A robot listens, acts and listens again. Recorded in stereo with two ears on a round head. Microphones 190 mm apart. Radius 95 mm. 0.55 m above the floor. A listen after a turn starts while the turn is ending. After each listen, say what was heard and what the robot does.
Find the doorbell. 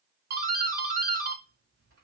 The doorbell: about 45° right or 135° right. Turn 45° right.
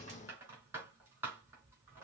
So it is at 10° right. Turn 10° right.
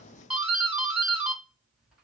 Found it: a doorbell, straight ahead.